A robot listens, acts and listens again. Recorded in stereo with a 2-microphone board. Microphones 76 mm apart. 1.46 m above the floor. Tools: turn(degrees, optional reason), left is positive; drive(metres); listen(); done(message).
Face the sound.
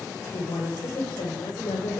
turn(degrees=90)
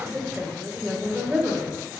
turn(degrees=-25, reason="So it is at 25° right.")
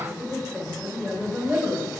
turn(degrees=-20, reason="The woman speaking is now 20° right.")
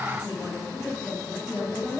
done("Facing the woman speaking.")